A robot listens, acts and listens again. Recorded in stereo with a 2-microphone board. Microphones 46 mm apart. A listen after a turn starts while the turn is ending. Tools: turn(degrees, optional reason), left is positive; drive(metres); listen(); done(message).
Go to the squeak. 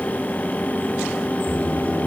turn(degrees=-90)
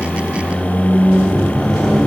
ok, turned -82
drive(metres=1.0)
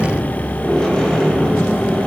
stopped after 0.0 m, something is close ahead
turn(degrees=10, reason="The squeak is now 10° left.")
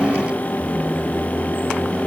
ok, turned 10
done("Blocked. The squeak is further on, straight ahead.")